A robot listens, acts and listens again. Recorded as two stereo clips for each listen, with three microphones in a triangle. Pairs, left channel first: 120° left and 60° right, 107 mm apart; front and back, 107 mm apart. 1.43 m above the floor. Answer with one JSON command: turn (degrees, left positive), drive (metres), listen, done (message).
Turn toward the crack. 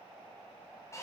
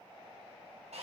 {"listen": true}
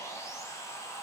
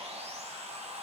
{"listen": true}
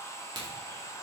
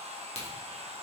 {"turn": -15}
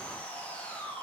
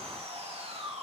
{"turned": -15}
{"done": "Facing where the crack came from. I can't hear it now."}